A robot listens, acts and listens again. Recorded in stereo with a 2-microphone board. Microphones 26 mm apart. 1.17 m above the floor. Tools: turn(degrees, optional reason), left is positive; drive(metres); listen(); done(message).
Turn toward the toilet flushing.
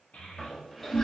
turn(degrees=25, reason="The toilet flushing: about 25° left or 155° left.")
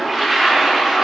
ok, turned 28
done("Found it: a toilet flushing, straight ahead, under 1 m away.")